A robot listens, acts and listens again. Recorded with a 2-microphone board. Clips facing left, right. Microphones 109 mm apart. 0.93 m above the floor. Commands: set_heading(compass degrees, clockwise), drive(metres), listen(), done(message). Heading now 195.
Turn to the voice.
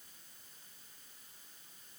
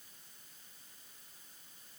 listen()
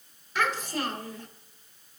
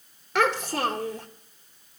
set_heading(285)
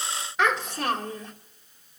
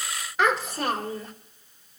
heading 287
done("Facing the child speaking.")